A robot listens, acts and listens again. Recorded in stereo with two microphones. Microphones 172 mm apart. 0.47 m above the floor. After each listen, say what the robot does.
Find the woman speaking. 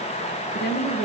Turn 60° left.
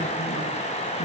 Keep listening.
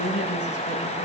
Turn 65° left.
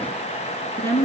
Turn 15° left.
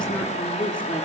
Found it: a woman speaking, straight ahead.